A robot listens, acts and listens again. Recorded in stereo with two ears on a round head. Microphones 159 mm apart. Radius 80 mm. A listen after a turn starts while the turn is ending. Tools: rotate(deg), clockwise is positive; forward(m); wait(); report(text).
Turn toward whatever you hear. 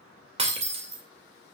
rotate(35)
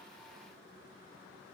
wait()
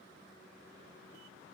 report("I heard breaking glass, but can't make it out now. It was about straight ahead or 110° right.")